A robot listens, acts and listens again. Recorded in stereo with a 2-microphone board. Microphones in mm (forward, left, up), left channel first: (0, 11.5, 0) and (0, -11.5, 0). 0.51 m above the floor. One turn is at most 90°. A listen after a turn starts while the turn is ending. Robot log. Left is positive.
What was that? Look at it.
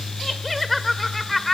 cmd yaw +30
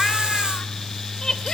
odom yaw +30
note: So it is at 150° left.
cmd yaw +90
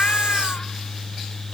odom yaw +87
note: Nothing new. It was at 60° left.
cmd yaw +60
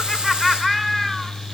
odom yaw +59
end: Facing the laughter, 1 to 2 m away.